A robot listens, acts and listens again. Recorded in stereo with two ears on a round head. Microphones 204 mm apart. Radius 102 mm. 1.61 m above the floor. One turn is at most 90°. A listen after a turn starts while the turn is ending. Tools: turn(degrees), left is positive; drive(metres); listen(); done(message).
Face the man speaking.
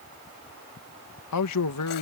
turn(degrees=90)
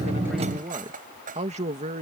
turn(degrees=-35)
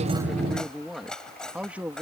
turn(degrees=-10)
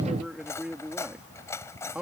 done("Facing the man speaking.")